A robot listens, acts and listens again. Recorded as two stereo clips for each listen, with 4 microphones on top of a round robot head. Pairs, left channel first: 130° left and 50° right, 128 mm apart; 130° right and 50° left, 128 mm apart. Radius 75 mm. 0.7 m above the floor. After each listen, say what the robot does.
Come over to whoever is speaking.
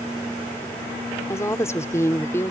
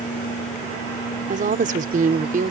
Turn 60° left.
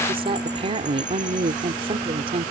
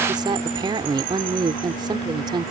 Drive 1.0 m forward.
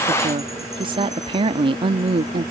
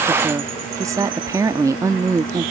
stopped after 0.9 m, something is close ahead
Turn 10° right.
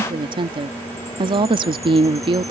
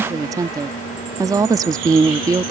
I am next to the woman speaking.